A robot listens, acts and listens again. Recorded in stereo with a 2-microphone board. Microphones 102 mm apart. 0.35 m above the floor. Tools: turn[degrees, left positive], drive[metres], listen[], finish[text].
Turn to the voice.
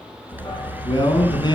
Thought: The man speaking: about 45° left or 135° left.
Action: turn[45]
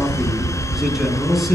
Action: listen[]
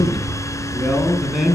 Action: finish[Facing the man speaking.]